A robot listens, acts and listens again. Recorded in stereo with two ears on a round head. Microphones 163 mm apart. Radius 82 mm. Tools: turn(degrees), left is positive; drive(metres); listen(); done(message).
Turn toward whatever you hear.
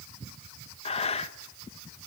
turn(degrees=35)
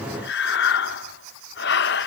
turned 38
turn(degrees=110)
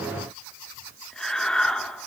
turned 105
done("Facing the breathing.")